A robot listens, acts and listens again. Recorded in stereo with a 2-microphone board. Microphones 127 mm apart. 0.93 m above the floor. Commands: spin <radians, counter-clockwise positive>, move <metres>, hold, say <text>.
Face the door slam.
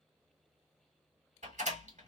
spin -1.57
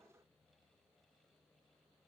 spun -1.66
say I heard a door slam from this way, but can't make it out now.